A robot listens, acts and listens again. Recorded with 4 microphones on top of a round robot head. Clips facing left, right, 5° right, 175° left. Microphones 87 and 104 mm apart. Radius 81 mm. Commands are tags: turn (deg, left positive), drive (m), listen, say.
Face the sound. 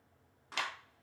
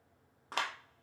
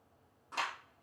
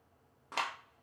<turn deg="-135"/>
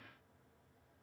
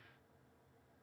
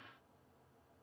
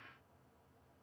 <listen/>
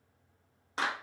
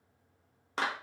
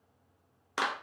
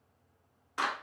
<turn deg="-30"/>
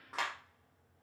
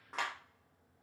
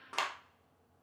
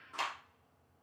<say>Found it: a clap, straight ahead, under 1 m away.</say>